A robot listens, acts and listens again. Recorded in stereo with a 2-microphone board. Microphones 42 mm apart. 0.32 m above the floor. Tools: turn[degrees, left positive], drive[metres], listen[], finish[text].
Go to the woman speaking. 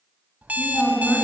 Thought: The woman speaking: about 25° left or 155° left.
Action: turn[25]
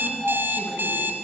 Action: listen[]
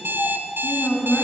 Thought: So it is at 130° left.
Action: turn[130]
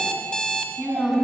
Action: drive[1.0]
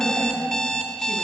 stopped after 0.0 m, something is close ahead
Action: listen[]
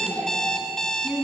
Thought: The woman speaking is now 10° left.
Action: turn[10]
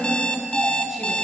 Action: finish[Something is in my way. I am facing the woman speaking but have not reached it.]